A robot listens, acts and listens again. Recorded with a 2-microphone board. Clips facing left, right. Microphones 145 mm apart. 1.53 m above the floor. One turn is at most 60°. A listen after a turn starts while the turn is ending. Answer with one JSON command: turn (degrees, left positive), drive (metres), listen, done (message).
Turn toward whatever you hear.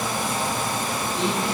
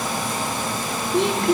{"turn": -60}
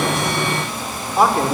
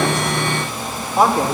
{"done": "Facing the man speaking, over 4 m away."}